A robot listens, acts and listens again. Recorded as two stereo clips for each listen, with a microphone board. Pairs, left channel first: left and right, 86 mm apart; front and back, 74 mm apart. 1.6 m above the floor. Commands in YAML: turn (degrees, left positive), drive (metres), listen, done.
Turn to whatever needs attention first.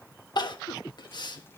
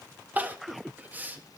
turn: 115
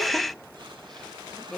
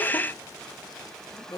done: "Found it: crying, straight ahead, 1 to 2 m away."